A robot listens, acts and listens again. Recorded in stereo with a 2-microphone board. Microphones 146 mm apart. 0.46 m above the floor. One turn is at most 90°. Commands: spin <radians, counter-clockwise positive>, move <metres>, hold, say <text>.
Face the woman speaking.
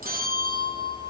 hold
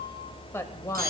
spin 0.35
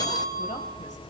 hold
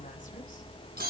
hold
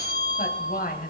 spin 1.57
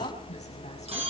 spin 0.35
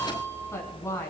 spin 0.35
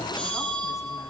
hold
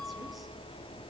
hold
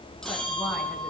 say I heard a woman speaking from this way, but can't make it out now.